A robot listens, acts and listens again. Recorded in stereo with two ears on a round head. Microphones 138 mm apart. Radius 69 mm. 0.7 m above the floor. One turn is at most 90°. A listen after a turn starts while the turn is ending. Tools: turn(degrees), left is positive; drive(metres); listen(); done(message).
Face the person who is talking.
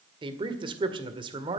turn(degrees=-30)
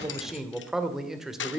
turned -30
done("Facing the man speaking.")